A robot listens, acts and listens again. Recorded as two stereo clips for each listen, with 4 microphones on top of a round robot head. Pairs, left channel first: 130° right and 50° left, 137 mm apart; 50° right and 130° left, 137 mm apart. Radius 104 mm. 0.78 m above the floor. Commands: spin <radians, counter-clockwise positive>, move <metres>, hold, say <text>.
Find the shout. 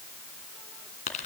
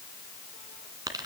hold
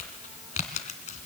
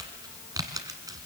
hold
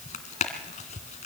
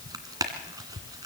say I can't make out a shout to turn to.